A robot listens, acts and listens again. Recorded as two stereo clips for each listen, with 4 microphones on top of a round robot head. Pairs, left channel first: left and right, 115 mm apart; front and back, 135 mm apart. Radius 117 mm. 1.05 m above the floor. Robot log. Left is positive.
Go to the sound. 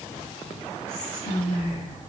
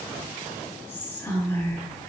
note: The whispering: 70° left.
cmd yaw +70
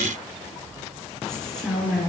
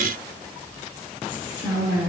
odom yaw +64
note: The whispering is now 10° left.
cmd yaw +10
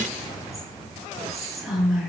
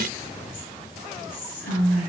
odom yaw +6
cmd fwd 1.0
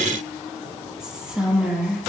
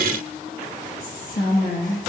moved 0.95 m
cmd fwd 1.0
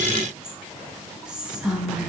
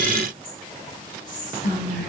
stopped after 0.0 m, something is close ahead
note: The whispering is now 10° right.
cmd yaw -10
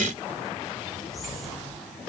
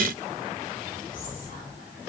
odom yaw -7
cmd idle
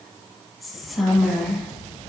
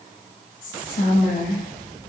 end: I am next to the whispering.